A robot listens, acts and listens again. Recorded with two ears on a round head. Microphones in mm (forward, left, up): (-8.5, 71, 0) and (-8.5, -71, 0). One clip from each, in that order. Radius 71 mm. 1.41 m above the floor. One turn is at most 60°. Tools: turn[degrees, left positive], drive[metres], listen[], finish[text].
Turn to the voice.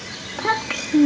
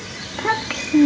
Action: turn[30]
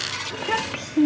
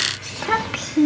Thought: So it is at 25° right.
Action: turn[-25]
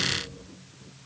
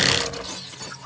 Action: listen[]
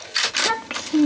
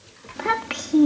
Action: finish[Found it: a child speaking, straight ahead.]